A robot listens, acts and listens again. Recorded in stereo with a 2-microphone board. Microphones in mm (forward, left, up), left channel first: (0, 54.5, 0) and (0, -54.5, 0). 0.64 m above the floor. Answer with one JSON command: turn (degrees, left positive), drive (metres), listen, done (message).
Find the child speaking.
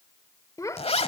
{"turn": 30}
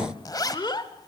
{"turn": 40}
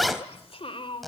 {"turn": 125}
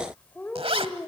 {"turn": 20}
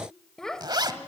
{"turn": 10}
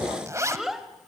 {"done": "Found it: a child speaking, straight ahead, 2 to 4 m away."}